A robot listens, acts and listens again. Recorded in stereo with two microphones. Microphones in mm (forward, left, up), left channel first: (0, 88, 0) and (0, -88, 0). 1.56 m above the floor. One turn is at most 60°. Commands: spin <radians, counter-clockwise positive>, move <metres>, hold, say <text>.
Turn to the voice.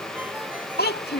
spin 1.05
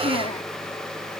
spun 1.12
hold
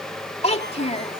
spin 0.70
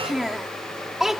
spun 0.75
say Found it: a child speaking, straight ahead.